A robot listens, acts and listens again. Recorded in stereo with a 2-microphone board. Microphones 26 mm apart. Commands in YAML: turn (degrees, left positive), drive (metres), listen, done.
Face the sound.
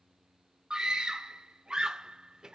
turn: -30
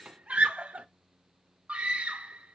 turn: -115
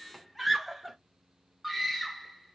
done: "Facing the scream, under 1 m away."